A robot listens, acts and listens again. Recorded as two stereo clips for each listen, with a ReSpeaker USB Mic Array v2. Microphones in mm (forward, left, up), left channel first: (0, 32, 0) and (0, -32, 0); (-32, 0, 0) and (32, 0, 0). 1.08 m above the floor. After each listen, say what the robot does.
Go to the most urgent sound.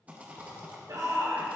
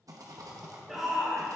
Turn 90° right.
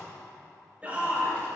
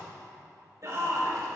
Turn 25° right.
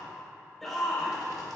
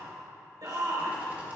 Drive 1.0 m forward.
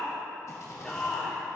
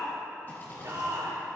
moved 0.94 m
Turn 10° left.
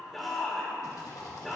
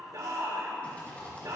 Drive 1.0 m forward.
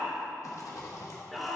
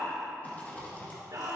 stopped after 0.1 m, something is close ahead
I am next to the shout.